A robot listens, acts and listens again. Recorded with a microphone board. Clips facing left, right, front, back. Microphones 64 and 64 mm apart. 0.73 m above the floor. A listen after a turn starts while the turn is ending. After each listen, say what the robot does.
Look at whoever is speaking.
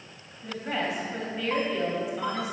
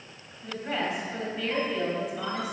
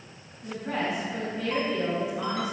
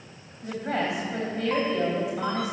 Turn 175° left.
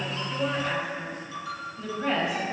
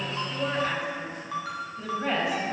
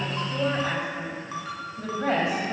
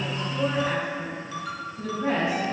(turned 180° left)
Found it: a woman speaking, straight ahead.